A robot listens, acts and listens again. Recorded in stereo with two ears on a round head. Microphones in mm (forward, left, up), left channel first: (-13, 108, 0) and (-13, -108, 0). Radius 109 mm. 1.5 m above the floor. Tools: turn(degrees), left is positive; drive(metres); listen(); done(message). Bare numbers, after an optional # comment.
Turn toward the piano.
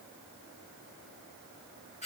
listen()
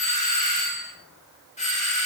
listen()
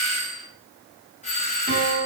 # The piano: about 35° right or 145° right.
turn(-35)
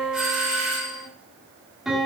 done("Facing the piano.")